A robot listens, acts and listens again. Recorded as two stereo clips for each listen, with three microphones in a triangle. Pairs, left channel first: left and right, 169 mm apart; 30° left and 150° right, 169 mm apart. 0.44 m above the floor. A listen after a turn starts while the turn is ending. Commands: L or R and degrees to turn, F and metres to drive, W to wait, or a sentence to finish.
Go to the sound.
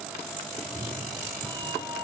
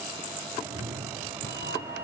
R155
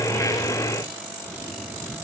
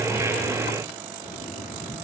F1.0
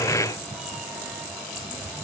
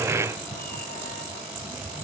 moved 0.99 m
F1.0
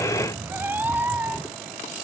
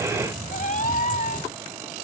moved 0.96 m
R10
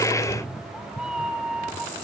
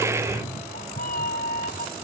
F1.0
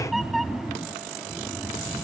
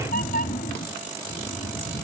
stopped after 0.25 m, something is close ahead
Arrived at the cat meowing, straight ahead.